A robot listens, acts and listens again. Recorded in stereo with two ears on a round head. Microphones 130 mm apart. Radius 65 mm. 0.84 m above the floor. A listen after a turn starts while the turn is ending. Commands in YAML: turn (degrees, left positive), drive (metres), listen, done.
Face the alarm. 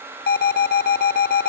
turn: 70
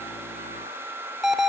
done: "Facing the alarm."